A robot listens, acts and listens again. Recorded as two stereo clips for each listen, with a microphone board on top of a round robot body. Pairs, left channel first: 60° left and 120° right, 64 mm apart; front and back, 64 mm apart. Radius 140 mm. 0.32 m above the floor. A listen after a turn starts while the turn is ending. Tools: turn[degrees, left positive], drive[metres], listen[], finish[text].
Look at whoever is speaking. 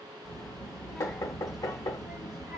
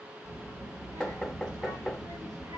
Thought: The child speaking: 160° left.
Action: turn[160]
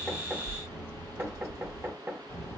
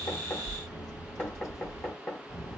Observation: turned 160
Thought: The child speaking is now 15° left.
Action: turn[15]
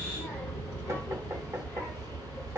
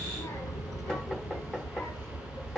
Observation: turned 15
Action: finish[Found it: a child speaking, straight ahead, over 4 m away.]